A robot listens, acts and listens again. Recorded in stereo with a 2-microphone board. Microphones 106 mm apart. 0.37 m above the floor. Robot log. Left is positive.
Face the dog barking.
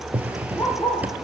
note: The dog barking: about 40° left or 140° left.
cmd yaw +40
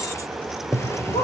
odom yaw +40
note: So it is at 95° left.
cmd yaw +95
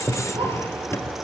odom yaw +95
cmd idle
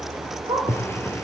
note: The dog barking is now 50° right.
cmd yaw -50
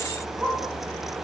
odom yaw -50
end: Found it: a dog barking, straight ahead, over 4 m away.